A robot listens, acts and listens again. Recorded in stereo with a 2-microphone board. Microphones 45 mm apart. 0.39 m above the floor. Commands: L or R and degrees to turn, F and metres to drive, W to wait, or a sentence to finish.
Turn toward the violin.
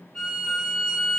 L30
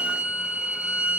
R20
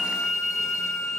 Facing the violin.